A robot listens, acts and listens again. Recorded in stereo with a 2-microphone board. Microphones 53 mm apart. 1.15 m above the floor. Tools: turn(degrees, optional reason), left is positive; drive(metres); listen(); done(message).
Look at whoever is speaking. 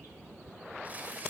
listen()
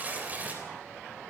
listen()
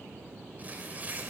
done("I can't make out anyone speaking, only tearing paper.")